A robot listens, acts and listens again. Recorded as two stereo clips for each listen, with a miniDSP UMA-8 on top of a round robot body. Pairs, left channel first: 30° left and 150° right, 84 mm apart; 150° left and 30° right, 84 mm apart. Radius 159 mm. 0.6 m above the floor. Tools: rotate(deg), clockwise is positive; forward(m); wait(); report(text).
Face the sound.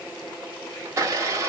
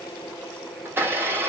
rotate(95)
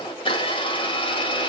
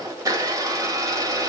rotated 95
rotate(-20)
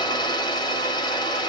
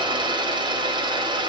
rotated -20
report("Facing the blender.")